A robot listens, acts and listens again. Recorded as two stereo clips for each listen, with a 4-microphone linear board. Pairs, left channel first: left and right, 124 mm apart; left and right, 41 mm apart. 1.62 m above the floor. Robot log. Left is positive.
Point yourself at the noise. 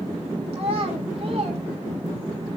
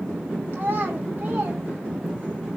note: The child speaking: about 50° right or 130° right.
cmd yaw -50
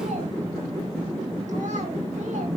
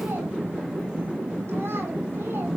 cmd idle
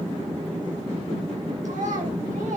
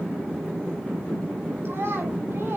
note: So it is at 85° right.
cmd yaw -85
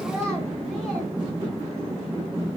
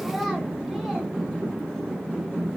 cmd idle
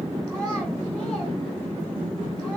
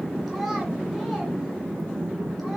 cmd idle
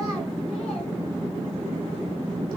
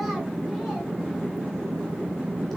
end: Facing where the child speaking came from. I can't hear it now.